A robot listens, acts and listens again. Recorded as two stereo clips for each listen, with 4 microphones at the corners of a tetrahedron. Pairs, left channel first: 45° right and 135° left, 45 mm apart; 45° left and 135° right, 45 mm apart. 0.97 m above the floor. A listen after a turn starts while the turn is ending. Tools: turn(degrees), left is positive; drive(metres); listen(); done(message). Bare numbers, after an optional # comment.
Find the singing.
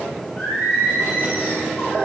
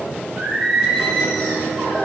# The singing: 65° right.
turn(-65)
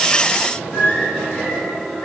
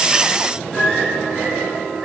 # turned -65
# The singing is now 35° right.
turn(-35)
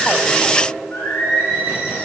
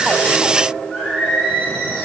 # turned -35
# The singing is now 20° right.
turn(-20)
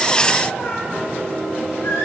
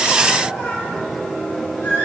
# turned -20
done("Facing the singing.")